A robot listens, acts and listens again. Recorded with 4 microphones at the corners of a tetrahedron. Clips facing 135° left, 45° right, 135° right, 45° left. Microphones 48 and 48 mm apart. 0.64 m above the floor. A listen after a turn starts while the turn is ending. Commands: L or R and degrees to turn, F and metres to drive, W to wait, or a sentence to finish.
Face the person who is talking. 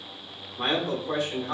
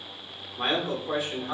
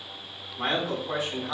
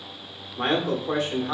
L30
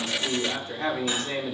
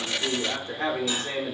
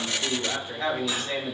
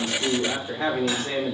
R15
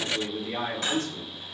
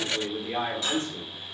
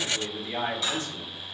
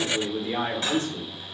Facing the man speaking, 1 to 2 m away.